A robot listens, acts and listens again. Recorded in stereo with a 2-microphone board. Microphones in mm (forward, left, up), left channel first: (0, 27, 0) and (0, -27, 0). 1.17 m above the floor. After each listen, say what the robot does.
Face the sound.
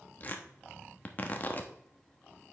Turn 35° left.
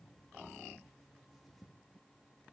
Keep listening.
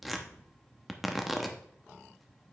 Found it: tearing paper, straight ahead.